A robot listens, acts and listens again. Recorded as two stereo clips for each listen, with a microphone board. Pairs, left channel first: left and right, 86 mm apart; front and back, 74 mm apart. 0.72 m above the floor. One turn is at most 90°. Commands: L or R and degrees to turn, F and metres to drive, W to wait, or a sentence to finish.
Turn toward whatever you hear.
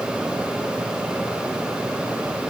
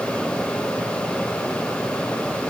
W
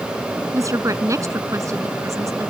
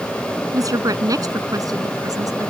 R90
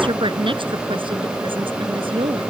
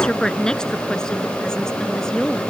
R80
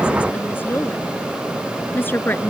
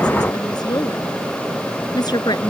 L25
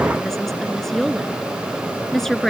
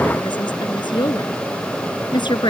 Facing the woman speaking.